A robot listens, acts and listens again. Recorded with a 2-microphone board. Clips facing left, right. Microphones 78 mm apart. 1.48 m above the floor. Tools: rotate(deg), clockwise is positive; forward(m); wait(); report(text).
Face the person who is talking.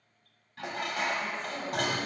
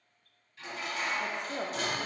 rotate(65)
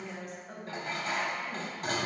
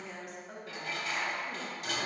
report("Facing the woman speaking.")